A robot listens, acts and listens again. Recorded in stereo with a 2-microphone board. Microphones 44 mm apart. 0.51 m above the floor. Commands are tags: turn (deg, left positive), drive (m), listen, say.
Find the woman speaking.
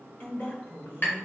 <turn deg="60"/>
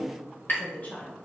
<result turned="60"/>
<turn deg="40"/>
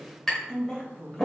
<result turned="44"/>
<turn deg="15"/>
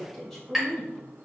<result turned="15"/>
<turn deg="10"/>
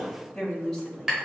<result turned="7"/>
<turn deg="10"/>
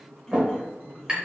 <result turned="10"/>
<say>Facing the woman speaking.</say>